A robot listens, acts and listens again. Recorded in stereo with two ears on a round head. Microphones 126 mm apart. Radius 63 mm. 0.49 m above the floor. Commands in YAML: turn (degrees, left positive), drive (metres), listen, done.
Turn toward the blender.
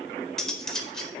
listen: true
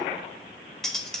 listen: true
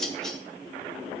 done: "I can't make out a blender, only cutlery clinking."